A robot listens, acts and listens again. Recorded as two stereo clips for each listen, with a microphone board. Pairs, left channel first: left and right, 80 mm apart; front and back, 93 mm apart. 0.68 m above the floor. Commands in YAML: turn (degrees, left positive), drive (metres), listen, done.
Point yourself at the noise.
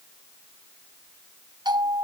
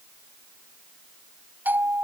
turn: -110
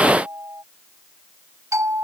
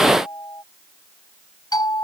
turn: -40
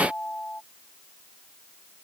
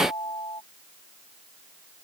turn: 15
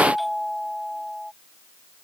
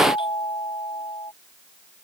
done: "Facing the doorbell."